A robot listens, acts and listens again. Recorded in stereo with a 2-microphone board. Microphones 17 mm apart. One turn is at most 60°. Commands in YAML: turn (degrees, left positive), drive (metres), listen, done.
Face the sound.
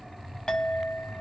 turn: 60
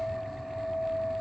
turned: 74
turn: 35
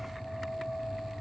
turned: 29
turn: 10
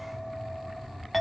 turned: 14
done: "Facing the clink."